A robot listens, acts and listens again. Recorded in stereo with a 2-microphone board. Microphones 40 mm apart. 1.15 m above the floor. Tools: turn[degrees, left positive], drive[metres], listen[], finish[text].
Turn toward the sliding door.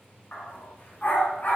Action: listen[]
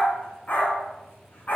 Action: listen[]
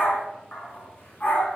Action: finish[I can't make out a sliding door, only a dog barking.]